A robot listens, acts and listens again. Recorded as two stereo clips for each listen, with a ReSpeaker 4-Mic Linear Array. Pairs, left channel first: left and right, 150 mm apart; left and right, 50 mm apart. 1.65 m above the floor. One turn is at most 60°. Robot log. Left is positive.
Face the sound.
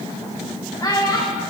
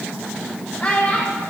note: The child speaking: about 30° left or 150° left.
cmd yaw +30
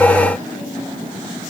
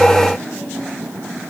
cmd idle
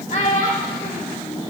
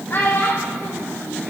note: So it is at 120° left.
cmd yaw +60
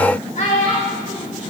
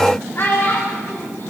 note: The child speaking is now 60° left.
cmd yaw +60
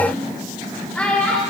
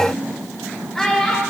note: The child speaking is now 10° left.
cmd yaw +10
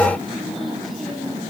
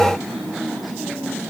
cmd idle
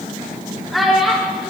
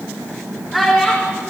end: Found it: a child speaking, straight ahead, 2 to 4 m away.